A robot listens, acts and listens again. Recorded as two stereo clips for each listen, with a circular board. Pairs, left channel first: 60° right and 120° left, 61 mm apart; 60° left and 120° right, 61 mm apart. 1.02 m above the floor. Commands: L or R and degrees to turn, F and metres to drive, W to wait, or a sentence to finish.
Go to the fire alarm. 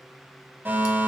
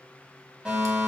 L170
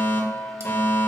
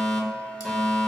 R25
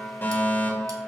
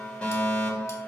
R10
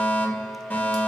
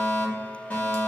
F1.0
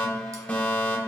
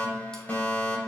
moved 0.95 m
F1.0
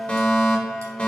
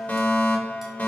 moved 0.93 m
F1.0
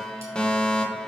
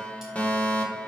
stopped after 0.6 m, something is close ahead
Arrived at the fire alarm, straight ahead.